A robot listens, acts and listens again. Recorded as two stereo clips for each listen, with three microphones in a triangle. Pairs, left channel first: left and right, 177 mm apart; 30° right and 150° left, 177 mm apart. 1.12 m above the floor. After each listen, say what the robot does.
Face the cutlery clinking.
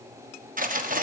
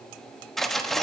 Turn 120° right.
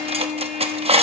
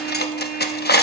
Turn 35° right.
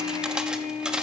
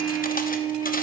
Keep listening.
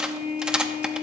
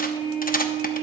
Found it: cutlery clinking, straight ahead.